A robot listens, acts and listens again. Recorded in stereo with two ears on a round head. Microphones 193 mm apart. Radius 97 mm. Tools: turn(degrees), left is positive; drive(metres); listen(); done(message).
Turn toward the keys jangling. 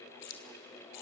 turn(degrees=90)
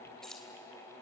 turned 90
done("Facing the keys jangling, 2 to 4 m away.")